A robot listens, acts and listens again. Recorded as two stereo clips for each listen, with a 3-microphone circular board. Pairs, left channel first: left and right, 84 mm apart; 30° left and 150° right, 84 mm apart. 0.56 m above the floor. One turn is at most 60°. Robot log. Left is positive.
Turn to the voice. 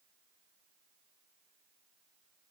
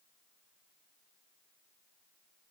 cmd idle
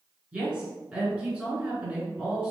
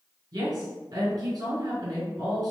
note: The woman speaking: 160° right.
cmd yaw -60
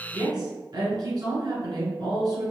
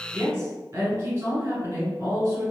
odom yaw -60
note: The woman speaking is now 100° right.
cmd yaw -60
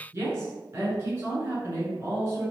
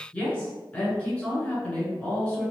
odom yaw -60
note: The woman speaking is now 35° right.
cmd yaw -35
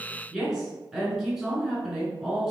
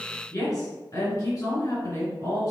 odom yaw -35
end: Facing the woman speaking.